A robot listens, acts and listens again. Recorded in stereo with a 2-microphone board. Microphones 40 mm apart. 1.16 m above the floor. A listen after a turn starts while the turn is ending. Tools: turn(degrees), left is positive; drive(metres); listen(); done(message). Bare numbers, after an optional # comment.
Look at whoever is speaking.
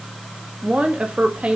# The woman speaking: about 30° right or 150° right.
turn(-30)
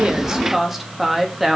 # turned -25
done("Facing the woman speaking, 2 to 4 m away.")